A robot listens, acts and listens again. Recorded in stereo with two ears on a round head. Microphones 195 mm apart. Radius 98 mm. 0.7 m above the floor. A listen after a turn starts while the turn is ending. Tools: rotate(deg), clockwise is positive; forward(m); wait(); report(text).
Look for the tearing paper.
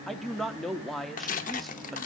rotate(-35)
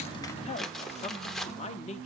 report("Found it: tearing paper, straight ahead.")